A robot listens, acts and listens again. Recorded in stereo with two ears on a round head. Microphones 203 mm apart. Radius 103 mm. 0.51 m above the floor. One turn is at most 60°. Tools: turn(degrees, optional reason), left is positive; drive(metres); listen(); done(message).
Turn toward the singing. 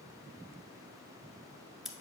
listen()
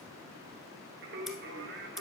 turn(degrees=-50, reason="The singing: about 50° right or 130° right.")
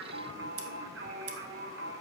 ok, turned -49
turn(degrees=-60, reason="So it is at 65° right.")
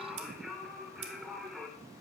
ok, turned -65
done("Facing the singing.")